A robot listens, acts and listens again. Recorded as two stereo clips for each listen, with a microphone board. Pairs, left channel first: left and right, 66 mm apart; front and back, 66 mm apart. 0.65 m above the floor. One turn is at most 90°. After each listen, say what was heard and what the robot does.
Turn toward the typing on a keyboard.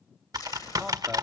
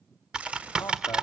The typing on a keyboard: 105° right. Turn 90° right.
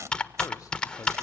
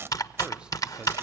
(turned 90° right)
The typing on a keyboard is now 15° left. Turn 15° left.
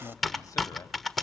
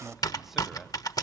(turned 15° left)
Facing the typing on a keyboard.